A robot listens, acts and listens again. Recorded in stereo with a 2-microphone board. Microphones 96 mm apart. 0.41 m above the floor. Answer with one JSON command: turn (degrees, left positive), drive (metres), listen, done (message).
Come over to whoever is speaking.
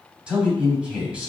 {"turn": -30}
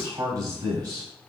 {"turn": -135}
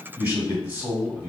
{"turn": -25}
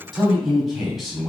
{"drive": 1.0}
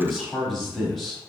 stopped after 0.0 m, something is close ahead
{"done": "Something is in my way. I am facing the man speaking but have not reached it."}